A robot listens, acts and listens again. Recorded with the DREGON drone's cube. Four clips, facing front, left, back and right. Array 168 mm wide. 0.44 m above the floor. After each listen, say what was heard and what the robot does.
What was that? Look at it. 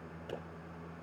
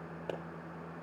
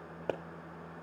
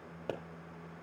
The pop: 170° right. Turn 170° right.
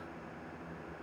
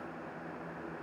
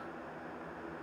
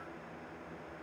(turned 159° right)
Nothing new. It was at 10° right. Turn 10° right.
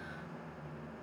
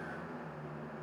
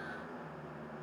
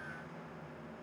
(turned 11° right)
Facing where the pop came from. I can't hear it now.